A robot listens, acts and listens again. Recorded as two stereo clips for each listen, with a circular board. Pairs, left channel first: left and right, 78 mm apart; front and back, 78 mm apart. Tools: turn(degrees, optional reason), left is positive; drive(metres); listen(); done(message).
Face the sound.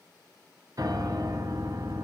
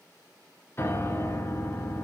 turn(degrees=-55, reason="The piano: 55° right.")
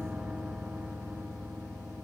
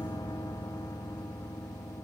turn(degrees=-10, reason="The piano is now 10° right.")
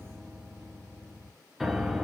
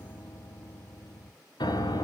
done("Found it: a piano, straight ahead.")